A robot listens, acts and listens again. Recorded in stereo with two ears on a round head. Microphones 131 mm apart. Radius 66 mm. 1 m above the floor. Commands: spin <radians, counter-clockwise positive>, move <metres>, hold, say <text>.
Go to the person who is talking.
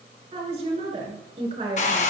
spin -0.70
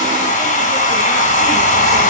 hold
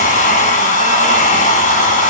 hold
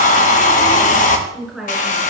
move 1.0
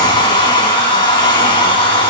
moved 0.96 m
hold
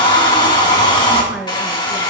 move 1.0
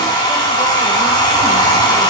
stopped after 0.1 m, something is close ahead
hold
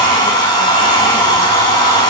hold
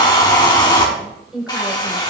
say Blocked. The woman speaking is further on, straight ahead.